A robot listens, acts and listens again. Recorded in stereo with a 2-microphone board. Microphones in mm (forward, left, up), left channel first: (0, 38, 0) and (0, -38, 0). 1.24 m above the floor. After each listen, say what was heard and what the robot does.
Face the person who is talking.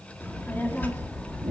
The child speaking: about 20° left or 160° left. Turn 20° left.
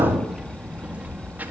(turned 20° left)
So it is at 25° right. Turn 25° right.
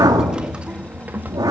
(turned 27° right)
The child speaking is now 25° right. Turn 25° right.
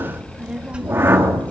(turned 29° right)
The child speaking is now 15° right. Turn 15° right.
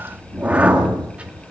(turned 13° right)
The child speaking is now 15° right. Turn 15° right.
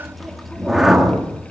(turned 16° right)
Facing the child speaking.